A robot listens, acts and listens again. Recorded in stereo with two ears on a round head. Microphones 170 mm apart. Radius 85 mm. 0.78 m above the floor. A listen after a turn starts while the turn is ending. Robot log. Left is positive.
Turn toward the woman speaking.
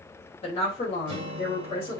note: The woman speaking: about 30° left or 150° left.
cmd yaw +30
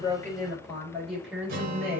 end: Found it: a woman speaking, straight ahead.